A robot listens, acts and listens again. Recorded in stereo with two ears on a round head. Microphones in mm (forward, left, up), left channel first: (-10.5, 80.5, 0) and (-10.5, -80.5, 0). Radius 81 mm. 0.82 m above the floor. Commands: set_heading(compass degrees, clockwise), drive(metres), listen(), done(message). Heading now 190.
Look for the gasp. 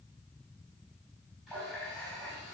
listen()
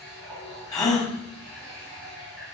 set_heading(170)
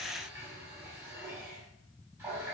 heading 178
listen()
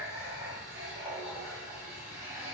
done("I heard a gasp, but can't make it out now. It was about 10° left or 150° left.")